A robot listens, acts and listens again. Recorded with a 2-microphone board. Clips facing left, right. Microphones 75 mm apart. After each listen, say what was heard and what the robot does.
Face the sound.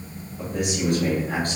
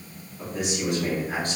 The man speaking: about 45° left or 135° left. Turn 45° left.
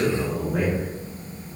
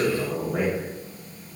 So it is at 10° right. Turn 10° right.
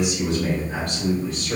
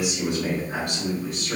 The man speaking is now 20° right. Turn 20° right.
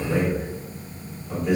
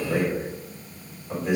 The man speaking is now 15° right. Turn 15° right.
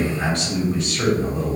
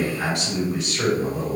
Found it: a man speaking, straight ahead, 2 to 4 m away.